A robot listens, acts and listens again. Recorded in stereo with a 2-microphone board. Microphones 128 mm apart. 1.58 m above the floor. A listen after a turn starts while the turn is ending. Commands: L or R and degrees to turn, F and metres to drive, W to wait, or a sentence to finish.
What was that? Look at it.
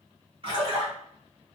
R45
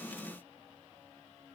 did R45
W
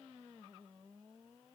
I heard a splash, but can't make it out now. It was about straight ahead or 90° right.